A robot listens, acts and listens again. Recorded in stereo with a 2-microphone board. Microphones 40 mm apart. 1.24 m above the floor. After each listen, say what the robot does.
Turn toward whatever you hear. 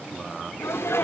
Turn 90° left.
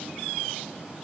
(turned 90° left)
I heard a sneeze from this way, but can't make it out now.